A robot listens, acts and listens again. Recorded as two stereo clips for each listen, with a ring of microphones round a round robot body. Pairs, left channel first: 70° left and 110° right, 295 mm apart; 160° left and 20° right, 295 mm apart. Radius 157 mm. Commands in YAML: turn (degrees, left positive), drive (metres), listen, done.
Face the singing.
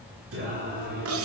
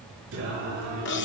turn: -65
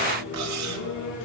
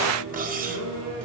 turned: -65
turn: 20
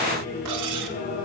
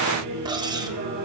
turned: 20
turn: 15
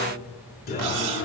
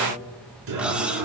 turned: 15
turn: 10
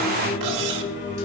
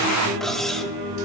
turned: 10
turn: 10
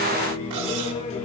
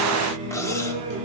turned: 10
done: "Facing the singing, over 4 m away."